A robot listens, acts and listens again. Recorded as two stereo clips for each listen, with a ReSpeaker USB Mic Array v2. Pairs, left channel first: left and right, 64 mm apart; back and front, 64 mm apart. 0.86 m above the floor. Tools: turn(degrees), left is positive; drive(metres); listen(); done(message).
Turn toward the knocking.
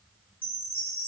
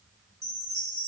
listen()
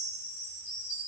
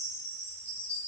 listen()
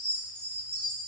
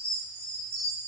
done("I can't make out knocking to turn to.")